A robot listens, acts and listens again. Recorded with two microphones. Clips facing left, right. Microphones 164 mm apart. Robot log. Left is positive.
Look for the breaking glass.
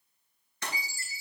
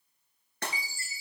note: The breaking glass: about 60° right or 120° right.
cmd yaw -60
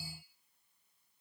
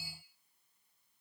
cmd idle
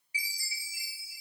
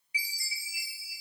end: I heard breaking glass, but can't make it out now. It was about straight ahead or 60° right.